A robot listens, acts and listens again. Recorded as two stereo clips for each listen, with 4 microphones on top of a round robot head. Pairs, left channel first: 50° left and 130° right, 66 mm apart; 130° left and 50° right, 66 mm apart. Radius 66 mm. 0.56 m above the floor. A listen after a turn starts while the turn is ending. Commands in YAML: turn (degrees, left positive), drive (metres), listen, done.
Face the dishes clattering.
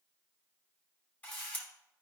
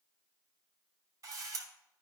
listen: true
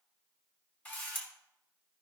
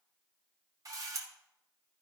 listen: true
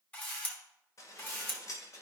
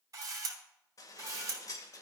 turn: 95
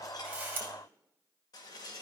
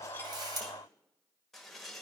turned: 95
turn: 40
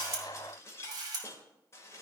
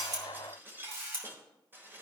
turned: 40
done: "Found it: dishes clattering, straight ahead, 1 to 2 m away."